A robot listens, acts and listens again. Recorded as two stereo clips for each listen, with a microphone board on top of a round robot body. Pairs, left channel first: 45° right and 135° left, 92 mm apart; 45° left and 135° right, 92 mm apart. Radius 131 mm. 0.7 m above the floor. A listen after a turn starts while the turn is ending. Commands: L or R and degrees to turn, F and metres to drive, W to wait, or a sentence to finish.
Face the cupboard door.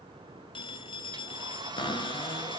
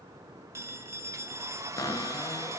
R10
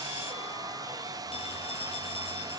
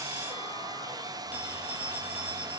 W
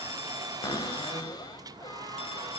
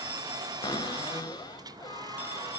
Found it: a cupboard door, straight ahead.